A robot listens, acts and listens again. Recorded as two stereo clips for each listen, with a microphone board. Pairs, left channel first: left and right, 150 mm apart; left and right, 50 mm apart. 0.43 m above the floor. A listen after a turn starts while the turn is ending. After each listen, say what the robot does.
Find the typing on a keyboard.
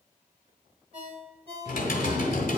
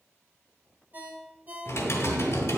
Turn 70° left.
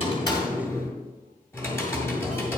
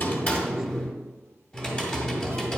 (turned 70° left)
Turn 20° left.
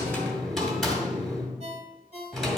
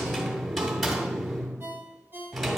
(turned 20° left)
Facing the typing on a keyboard.